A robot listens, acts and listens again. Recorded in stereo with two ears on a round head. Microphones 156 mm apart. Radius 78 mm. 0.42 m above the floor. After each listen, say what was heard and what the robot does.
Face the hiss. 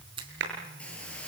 Turn 30° left.
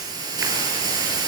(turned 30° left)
So it is at 25° right. Turn 25° right.
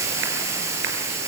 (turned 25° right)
The hiss is now 15° right. Turn 15° right.
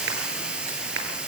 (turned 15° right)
Facing the hiss.